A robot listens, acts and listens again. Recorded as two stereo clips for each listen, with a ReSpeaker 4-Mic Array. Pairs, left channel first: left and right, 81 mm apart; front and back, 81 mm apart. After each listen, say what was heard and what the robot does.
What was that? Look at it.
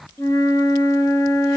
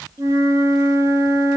The flute: 135° left. Turn 135° left.
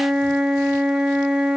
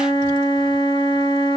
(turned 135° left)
The flute is now 10° right. Turn 10° right.
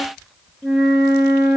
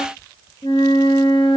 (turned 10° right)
Facing the flute, 1 to 2 m away.